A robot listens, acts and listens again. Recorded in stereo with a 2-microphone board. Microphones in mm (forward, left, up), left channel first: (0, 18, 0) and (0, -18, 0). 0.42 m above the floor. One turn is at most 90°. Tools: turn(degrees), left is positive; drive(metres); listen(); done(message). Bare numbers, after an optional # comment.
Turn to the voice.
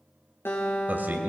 # The man speaking: about 55° right or 125° right.
turn(-55)
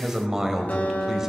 # So it is at 15° right.
turn(-15)
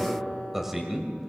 # The man speaking is now 10° right.
turn(-10)
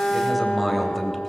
done("Facing the man speaking.")